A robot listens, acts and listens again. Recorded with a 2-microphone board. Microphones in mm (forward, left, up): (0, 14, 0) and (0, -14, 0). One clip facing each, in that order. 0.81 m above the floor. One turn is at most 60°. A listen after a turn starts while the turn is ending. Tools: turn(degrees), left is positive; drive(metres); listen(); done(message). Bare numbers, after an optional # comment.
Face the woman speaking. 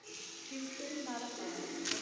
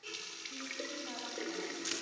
# The woman speaking: about 25° left or 155° left.
turn(25)
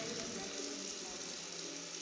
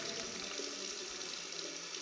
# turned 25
listen()
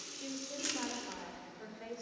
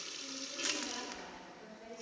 # The woman speaking: about 35° left or 145° left.
turn(35)
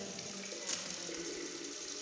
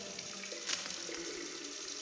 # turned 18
listen()
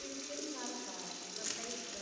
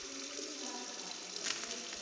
# So it is at 130° left.
turn(60)
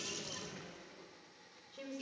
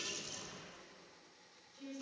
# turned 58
# The woman speaking is now 65° left.
turn(60)
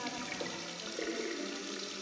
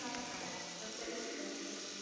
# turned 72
listen()
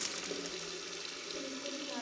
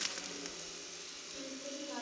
done("Facing the woman speaking.")